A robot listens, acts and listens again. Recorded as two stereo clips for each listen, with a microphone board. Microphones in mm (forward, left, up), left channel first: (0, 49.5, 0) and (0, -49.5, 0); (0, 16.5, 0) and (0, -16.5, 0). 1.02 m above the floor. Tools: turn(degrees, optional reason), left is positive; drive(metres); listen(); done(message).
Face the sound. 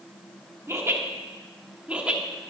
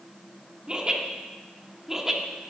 turn(degrees=-30)
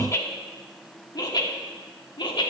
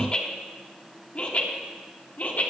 turn(degrees=50, reason="So it is at 50° left.")
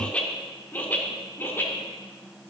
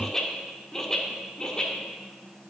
turn(degrees=20, reason="The laughter is now 20° left.")
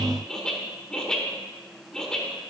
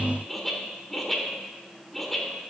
done("Found it: laughter, straight ahead, 2 to 4 m away.")